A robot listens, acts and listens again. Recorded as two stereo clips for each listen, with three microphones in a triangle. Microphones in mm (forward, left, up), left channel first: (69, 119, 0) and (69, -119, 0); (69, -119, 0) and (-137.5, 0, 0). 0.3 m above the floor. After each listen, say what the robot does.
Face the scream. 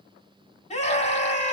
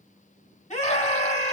Turn 30° left.
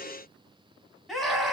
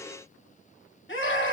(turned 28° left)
Found it: a scream, straight ahead.